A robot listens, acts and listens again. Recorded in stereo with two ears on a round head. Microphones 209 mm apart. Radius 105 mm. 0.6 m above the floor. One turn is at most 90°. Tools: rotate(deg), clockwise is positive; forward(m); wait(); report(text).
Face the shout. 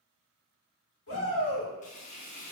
rotate(-55)
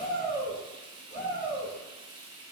rotate(-45)
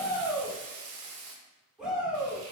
report("Facing the shout, 1 to 2 m away.")